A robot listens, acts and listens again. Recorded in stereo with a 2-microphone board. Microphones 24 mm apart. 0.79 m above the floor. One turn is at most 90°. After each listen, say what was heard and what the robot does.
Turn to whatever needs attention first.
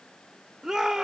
The shout: about 30° right or 150° right. Turn 30° right.
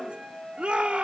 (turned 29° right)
So it is at 125° right. Turn 90° right.
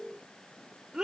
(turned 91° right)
The shout is now 35° right. Turn 35° right.
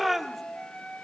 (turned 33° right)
Found it: a shout, straight ahead, 2 to 4 m away.